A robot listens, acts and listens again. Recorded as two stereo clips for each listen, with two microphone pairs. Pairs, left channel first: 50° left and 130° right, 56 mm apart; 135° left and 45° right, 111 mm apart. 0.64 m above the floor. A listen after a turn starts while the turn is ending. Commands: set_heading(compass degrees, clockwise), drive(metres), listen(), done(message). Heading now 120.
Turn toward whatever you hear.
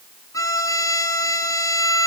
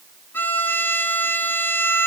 set_heading(60)
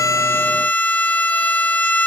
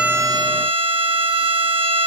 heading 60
set_heading(70)
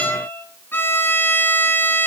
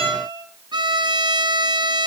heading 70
done("Found it: a violin, straight ahead.")